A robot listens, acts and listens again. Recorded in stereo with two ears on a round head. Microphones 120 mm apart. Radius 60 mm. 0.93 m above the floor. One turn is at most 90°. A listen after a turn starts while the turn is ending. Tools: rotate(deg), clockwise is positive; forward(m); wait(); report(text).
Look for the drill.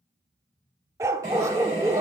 rotate(25)
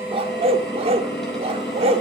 report("Facing the drill, over 4 m away.")